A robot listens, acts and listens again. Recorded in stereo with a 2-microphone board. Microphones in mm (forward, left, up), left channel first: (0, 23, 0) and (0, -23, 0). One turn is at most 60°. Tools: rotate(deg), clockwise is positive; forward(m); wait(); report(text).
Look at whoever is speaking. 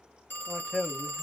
rotate(-30)
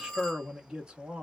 rotate(20)
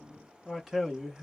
report("Facing the man speaking.")